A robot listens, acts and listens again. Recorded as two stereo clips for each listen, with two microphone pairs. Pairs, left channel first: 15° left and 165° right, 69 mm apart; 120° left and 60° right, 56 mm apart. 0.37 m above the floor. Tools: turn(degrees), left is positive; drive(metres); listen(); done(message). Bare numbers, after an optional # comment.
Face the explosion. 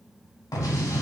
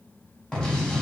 # The explosion: 45° left.
turn(45)
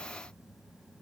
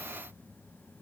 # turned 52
done("I heard an explosion from this way, but can't make it out now.")